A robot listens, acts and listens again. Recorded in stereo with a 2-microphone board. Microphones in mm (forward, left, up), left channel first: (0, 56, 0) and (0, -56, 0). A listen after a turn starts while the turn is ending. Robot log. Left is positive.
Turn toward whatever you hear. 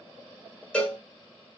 cmd yaw +30
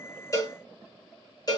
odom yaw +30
note: So it is at 140° left.
cmd yaw +140
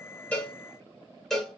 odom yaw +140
end: Found it: a cowbell, straight ahead.